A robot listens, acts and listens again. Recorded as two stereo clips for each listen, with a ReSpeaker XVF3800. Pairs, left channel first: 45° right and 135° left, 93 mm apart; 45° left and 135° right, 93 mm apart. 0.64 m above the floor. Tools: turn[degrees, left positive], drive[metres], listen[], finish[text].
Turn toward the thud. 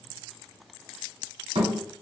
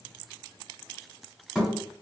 Thought: The thud: 135° left.
Action: turn[135]
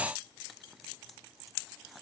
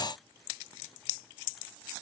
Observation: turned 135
Action: finish[Facing where the thud came from. I can't hear it now.]